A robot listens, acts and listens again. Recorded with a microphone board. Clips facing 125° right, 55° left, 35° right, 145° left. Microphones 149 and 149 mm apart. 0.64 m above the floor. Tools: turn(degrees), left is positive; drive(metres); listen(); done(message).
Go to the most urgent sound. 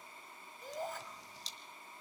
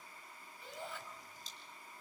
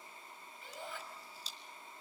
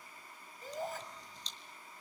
turn(degrees=-170)
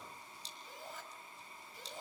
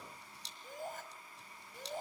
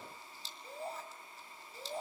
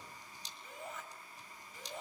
turn(degrees=20)
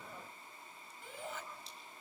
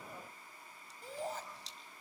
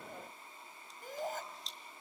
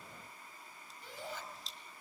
drive(metres=1.0)
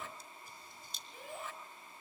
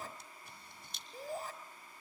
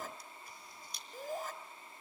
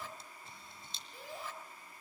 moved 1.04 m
turn(degrees=10)
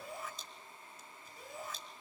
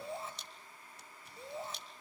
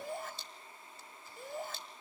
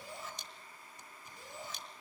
drive(metres=1.0)
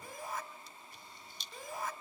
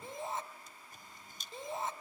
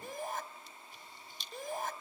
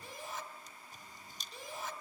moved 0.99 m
drive(metres=1.0)
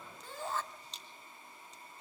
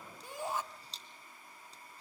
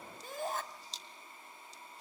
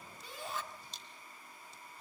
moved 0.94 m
turn(degrees=-15)
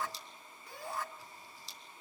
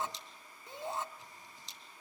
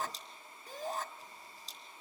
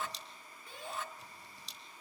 drive(metres=1.0)
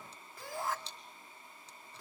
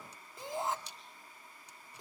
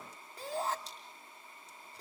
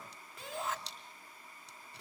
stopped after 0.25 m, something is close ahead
done("Arrived at the shout, straight ahead.")